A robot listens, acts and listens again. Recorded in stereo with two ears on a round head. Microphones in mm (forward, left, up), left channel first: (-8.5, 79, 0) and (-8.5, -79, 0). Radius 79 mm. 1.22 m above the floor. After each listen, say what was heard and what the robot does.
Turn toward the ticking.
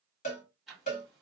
Turn 30° left.
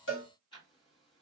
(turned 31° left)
So it is at 150° left. Turn 150° left.
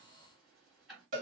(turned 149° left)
Facing the ticking, 2 to 4 m away.